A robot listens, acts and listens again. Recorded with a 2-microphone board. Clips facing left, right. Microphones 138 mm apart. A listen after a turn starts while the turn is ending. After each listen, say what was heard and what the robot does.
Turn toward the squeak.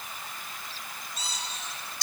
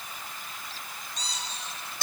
Turn 30° left.
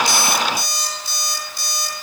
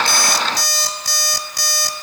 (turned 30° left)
Keep listening.
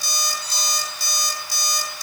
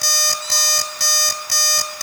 Keep listening.
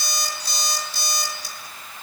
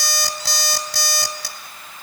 I heard a squeak, but can't make it out now. It was about 25° right or 145° left.